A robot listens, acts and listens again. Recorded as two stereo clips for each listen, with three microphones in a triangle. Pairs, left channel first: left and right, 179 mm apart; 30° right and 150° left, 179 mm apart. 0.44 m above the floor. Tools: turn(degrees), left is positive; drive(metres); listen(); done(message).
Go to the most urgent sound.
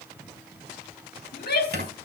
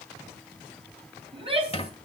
turn(degrees=95)
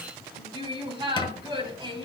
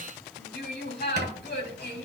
turn(degrees=-30)
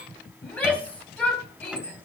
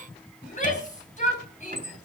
turn(degrees=10)
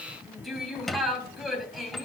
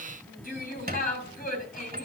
drive(metres=1.0)
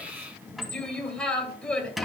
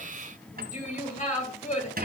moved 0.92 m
drive(metres=1.0)
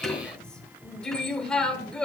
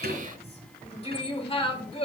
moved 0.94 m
drive(metres=1.0)
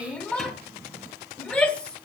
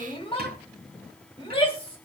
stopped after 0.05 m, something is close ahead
turn(degrees=10)
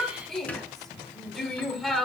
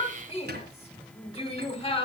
done("I am next to the shout.")